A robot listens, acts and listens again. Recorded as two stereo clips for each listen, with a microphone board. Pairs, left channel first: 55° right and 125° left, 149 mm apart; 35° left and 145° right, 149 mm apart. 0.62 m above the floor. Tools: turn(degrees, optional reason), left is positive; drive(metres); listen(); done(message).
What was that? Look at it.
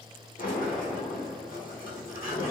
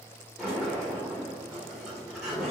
turn(degrees=-60, reason="The sliding door: 60° right.")
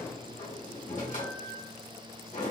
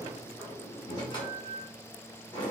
turn(degrees=-20, reason="The sliding door is now 20° right.")
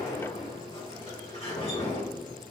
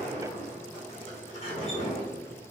turn(degrees=-10, reason="The sliding door is now 10° right.")
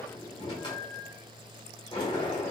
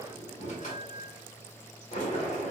done("Found it: a sliding door, straight ahead, 1 to 2 m away.")